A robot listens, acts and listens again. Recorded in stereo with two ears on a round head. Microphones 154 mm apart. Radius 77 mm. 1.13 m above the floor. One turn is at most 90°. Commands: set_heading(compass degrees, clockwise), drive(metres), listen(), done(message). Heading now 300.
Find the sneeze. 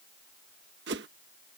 listen()
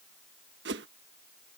listen()
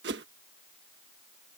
done("I can't make out a sneeze to turn to.")